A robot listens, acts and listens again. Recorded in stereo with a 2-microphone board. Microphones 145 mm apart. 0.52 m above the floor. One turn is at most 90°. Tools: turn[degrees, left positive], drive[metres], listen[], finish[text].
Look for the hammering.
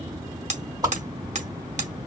Thought: The hammering: about 55° right or 125° right.
Action: turn[-55]
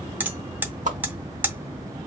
Thought: So it is at 15° right.
Action: turn[-15]
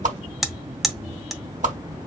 Action: finish[Found it: hammering, straight ahead, under 1 m away.]